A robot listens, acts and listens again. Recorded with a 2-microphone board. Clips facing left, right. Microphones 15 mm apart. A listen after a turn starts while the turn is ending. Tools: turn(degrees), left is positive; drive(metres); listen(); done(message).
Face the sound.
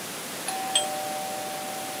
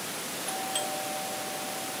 turn(degrees=40)
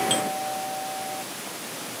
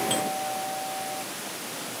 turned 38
turn(degrees=10)
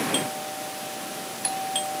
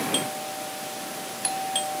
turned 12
done("Found it: a doorbell, straight ahead.")